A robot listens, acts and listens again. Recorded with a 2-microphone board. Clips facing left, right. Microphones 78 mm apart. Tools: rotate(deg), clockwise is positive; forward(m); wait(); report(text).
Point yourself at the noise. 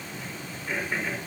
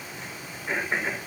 rotate(25)
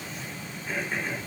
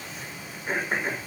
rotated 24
rotate(130)
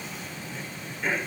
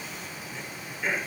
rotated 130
report("Facing the throat clearing.")